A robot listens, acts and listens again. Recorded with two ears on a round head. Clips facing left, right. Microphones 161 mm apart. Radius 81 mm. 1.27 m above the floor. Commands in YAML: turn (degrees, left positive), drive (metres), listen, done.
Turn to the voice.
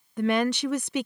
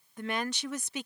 turn: 55
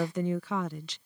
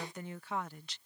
turn: 65
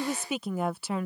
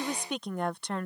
done: "Found it: a woman speaking, straight ahead."